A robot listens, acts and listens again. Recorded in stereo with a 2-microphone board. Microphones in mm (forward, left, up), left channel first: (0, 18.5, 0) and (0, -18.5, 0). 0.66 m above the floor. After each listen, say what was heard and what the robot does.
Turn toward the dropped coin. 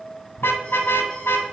Keep listening.
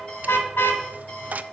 The dropped coin: about 45° right or 135° right. Turn 45° right.
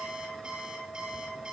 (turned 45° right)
Keep listening.
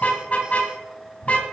I heard a dropped coin, but can't make it out now. It was about straight ahead or 90° right.